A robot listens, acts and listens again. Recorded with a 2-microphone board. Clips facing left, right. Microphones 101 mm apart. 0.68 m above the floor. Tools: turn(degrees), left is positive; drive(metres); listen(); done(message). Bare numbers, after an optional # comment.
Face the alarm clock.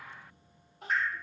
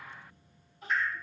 listen()
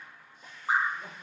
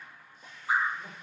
listen()
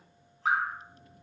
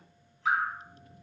done("I can't make out an alarm clock to turn to.")